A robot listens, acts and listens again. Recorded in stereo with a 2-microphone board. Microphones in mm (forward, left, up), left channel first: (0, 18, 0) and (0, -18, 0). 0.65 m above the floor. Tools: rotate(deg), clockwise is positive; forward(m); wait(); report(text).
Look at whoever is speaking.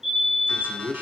rotate(55)
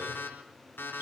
wait()
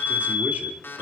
wait()
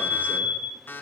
report("I heard a man speaking, but can't make it out now. It was about straight ahead or 70° right.")